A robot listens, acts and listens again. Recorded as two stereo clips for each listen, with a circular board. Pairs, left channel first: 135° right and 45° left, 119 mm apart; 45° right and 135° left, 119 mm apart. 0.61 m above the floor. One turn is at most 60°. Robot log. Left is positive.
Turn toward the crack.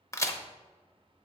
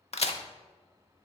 note: The crack: 70° right.
cmd yaw -60
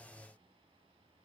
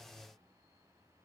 note: Nothing new. It was at 10° right.
cmd yaw -10
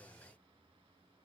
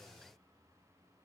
end: Facing where the crack came from. I can't hear it now.